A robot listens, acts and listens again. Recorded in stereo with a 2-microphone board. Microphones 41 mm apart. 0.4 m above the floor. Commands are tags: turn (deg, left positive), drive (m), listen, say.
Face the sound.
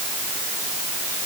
<listen/>
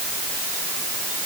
<listen/>
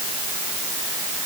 <say>I can't make out anything.</say>